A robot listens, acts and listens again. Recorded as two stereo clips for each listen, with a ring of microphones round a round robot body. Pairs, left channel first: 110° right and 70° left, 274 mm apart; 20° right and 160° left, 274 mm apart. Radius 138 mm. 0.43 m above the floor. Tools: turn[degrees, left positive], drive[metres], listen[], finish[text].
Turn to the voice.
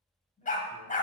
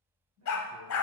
Thought: The man speaking: straight behind.
Action: turn[180]
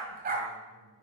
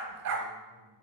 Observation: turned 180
Action: listen[]
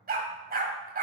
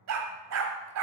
Action: finish[Facing the man speaking.]